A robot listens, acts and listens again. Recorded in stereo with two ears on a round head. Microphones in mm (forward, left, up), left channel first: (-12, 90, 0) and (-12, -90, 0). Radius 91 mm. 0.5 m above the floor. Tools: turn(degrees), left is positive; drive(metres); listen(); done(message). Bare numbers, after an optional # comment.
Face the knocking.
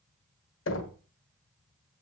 # The knocking: about 70° left or 110° left.
turn(70)
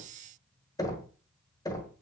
# So it is at 20° left.
turn(20)
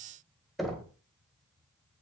done("Facing the knocking.")